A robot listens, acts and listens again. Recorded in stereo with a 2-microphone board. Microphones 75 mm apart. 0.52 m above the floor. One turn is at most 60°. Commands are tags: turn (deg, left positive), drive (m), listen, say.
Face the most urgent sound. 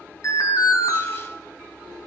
<turn deg="50"/>
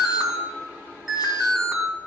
<say>Found it: an alarm, straight ahead, 2 to 4 m away.</say>